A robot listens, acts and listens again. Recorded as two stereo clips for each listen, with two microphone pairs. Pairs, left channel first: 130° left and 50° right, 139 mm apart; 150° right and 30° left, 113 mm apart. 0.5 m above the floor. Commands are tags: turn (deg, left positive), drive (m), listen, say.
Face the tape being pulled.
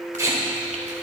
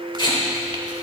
<turn deg="-115"/>
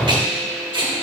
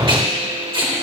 <say>Found it: tape being pulled, straight ahead.</say>